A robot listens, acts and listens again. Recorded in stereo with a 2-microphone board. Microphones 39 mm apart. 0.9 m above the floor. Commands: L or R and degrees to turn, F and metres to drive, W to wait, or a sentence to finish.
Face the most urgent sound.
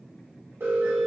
R75
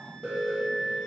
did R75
R15
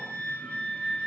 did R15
W
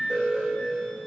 Facing the alarm.